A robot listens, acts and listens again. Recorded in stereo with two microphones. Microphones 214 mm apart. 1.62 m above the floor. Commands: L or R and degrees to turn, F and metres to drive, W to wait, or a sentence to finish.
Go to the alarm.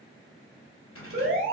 R55
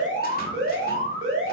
R70
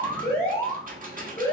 L15
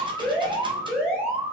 F1.0
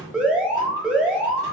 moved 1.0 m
F1.0
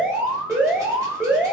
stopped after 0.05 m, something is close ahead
I am next to the alarm.